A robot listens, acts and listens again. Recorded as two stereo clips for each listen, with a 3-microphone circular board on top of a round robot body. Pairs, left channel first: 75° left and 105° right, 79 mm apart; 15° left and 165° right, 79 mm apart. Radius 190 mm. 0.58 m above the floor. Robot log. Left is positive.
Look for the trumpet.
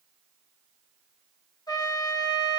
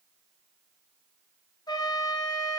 note: The trumpet: 45° left.
cmd yaw +45
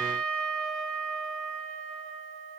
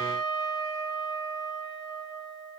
end: Facing the trumpet.